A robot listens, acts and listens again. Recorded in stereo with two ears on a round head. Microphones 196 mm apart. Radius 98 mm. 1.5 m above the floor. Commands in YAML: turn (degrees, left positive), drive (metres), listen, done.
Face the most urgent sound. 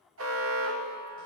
turn: -70
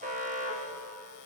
turn: -35
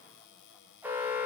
turn: -10
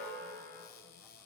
done: "Found it: an alarm, straight ahead."